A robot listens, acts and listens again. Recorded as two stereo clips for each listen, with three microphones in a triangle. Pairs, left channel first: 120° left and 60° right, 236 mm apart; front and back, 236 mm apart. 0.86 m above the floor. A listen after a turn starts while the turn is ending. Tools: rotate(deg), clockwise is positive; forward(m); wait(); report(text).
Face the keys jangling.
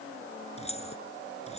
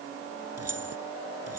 rotate(175)
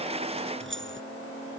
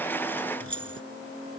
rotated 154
rotate(25)
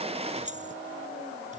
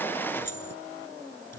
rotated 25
report("Found it: keys jangling, straight ahead.")